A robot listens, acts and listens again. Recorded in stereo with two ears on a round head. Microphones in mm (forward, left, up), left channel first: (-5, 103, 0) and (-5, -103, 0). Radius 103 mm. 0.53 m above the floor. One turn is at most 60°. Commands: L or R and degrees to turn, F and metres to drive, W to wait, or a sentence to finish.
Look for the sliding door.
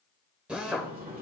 R40
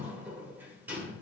R10
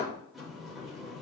Found it: a sliding door, straight ahead, 1 to 2 m away.